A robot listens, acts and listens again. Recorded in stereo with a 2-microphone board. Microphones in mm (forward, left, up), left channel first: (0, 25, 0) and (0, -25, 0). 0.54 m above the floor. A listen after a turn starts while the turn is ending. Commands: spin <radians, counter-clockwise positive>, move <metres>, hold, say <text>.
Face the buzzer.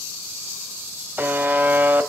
spin -0.61
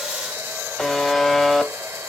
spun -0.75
say Facing the buzzer, under 1 m away.